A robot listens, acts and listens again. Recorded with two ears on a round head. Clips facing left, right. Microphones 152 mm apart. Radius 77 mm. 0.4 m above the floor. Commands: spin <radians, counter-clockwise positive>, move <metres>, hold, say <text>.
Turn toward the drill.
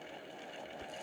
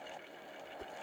hold
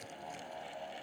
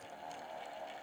hold
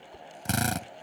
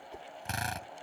spin 1.05
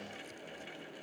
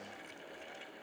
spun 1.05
hold
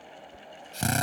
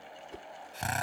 spin 0.96
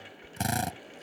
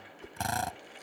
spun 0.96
spin 0.35
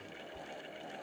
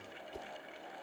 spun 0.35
hold
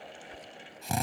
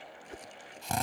say Found it: a drill, straight ahead.